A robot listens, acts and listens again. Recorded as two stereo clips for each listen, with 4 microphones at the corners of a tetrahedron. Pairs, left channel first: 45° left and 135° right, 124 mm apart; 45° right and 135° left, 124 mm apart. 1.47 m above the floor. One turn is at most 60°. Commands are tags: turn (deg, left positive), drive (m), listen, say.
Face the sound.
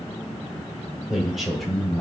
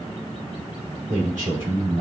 <turn deg="60"/>
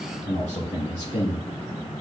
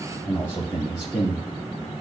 <turn deg="10"/>
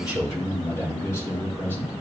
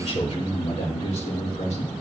<turn deg="-30"/>
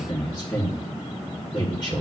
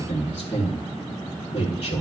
<turn deg="-10"/>
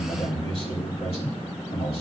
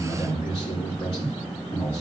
<say>Facing the man speaking.</say>